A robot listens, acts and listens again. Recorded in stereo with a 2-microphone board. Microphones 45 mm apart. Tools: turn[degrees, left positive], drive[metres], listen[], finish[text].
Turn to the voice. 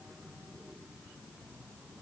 Action: listen[]
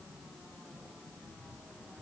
Action: listen[]
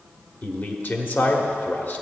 Thought: The man speaking: about 45° left or 135° left.
Action: turn[45]
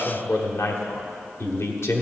Thought: So it is at 90° left.
Action: turn[90]
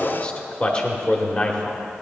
Thought: The man speaking is now 25° left.
Action: turn[25]
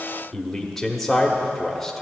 Action: finish[Found it: a man speaking, straight ahead, 1 to 2 m away.]